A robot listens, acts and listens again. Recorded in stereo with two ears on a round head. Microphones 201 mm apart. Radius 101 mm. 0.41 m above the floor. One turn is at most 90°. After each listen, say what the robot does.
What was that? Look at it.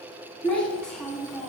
Turn 30° left.
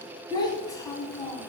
Turn 30° left.
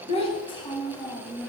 Turn 30° left.
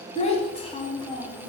Turn 90° left.
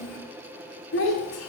Turn 55° left.
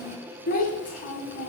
Turn 35° left.
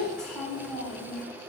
Found it: a child speaking, straight ahead, 1 to 2 m away.